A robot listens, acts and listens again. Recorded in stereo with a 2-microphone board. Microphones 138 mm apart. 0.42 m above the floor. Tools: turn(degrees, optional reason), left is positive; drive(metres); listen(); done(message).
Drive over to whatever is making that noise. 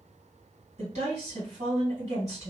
turn(degrees=-55, reason="The woman speaking: about 55° right or 125° right.")
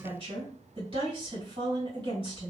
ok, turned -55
turn(degrees=-55, reason="So it is at 55° right.")
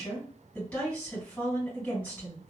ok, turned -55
turn(degrees=15, reason="The woman speaking is now 15° left.")
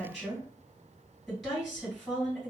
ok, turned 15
drive(metres=1.0)
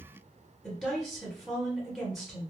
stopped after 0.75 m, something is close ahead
done("Arrived at the woman speaking, straight ahead.")